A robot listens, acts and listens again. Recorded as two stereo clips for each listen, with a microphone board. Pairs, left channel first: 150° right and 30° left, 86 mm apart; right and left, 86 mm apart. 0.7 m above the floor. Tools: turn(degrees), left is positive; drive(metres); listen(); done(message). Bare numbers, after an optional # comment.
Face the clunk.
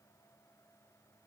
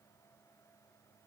listen()
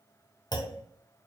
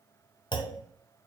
# The clunk: 115° right.
turn(-115)
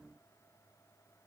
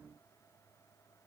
done("Facing where the clunk came from. I can't hear it now.")